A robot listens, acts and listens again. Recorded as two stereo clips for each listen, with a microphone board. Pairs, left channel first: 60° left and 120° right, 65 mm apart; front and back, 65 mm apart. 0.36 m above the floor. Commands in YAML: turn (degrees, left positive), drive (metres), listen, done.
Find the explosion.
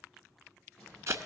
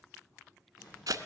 turn: -25
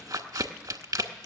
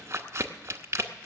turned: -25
done: "Facing where the explosion came from. I can't hear it now."